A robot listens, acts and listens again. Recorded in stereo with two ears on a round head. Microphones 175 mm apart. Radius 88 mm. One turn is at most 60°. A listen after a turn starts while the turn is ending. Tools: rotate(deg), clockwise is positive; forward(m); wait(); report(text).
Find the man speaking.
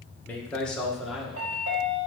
rotate(30)
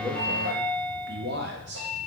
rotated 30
rotate(60)
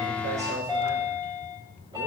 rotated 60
rotate(35)
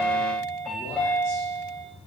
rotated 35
wait()
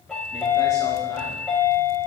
wait()
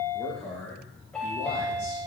rotate(-15)
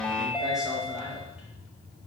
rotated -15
wait()
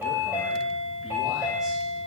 wait()
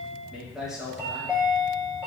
report("Found it: a man speaking, straight ahead.")